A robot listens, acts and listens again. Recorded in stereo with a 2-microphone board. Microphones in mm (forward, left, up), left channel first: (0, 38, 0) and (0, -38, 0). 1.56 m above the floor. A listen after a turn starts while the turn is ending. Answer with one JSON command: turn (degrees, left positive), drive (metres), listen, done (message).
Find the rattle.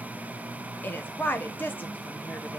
{"listen": true}
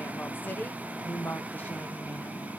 {"listen": true}
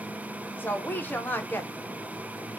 {"done": "I can't make out a rattle, only a woman speaking."}